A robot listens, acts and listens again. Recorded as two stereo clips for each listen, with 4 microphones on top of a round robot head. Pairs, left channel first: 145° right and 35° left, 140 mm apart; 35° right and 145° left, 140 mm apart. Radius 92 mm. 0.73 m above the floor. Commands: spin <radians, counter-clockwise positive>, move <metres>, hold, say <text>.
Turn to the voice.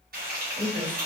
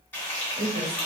spin 1.66
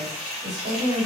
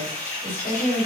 say Facing the woman speaking.